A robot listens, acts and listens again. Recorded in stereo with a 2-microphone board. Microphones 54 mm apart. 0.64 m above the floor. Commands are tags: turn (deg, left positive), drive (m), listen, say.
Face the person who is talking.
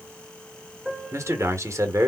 <turn deg="-70"/>
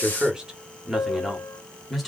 <say>Found it: a man speaking, straight ahead.</say>